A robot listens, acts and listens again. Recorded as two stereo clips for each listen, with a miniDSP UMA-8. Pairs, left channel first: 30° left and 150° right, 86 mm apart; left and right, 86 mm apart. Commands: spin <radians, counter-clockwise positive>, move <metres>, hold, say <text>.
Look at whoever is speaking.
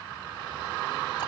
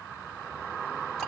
hold
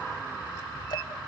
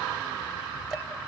hold
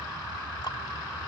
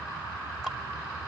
say I can't make out anyone speaking to turn to.